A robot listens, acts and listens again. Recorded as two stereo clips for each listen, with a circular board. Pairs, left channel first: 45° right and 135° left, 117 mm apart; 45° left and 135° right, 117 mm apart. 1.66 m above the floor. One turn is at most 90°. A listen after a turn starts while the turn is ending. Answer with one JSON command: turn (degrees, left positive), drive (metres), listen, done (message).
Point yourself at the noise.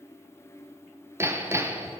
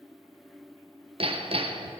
{"turn": -90}
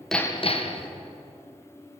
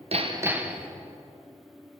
{"turn": -60}
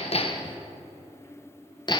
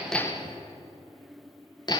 {"done": "Found it: hammering, straight ahead."}